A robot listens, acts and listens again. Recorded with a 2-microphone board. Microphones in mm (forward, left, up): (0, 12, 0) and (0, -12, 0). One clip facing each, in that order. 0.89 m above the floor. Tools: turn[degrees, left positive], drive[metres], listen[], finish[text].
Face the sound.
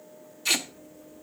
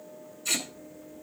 Action: turn[90]
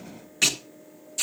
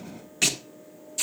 Action: finish[Found it: tape being pulled, straight ahead.]